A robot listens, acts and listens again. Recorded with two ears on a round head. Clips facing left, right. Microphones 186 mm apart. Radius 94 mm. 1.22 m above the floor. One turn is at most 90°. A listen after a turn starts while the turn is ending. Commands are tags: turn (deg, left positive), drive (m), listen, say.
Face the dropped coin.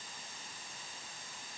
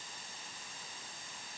<listen/>
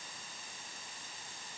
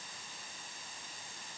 <listen/>
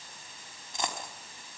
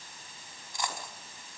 <turn deg="20"/>
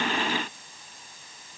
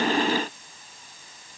<listen/>
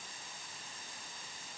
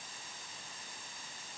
<say>I heard a dropped coin, but can't make it out now. It was about straight ahead or 140° left.</say>